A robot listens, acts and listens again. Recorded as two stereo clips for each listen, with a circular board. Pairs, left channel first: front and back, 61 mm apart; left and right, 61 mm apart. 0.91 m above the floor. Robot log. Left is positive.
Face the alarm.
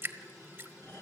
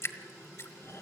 cmd idle
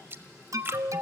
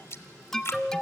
note: The alarm: 175° left.
cmd yaw +175
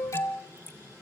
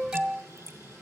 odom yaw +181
note: The alarm is now 10° right.
cmd yaw -10
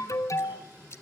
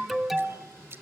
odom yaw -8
end: Found it: an alarm, straight ahead, 1 to 2 m away.